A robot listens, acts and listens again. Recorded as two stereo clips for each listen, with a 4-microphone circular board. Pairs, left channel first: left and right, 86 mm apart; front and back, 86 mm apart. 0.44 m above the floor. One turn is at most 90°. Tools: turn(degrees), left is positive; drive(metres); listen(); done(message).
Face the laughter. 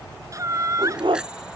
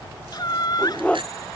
turn(degrees=-40)
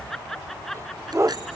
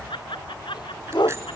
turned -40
done("Found it: laughter, straight ahead.")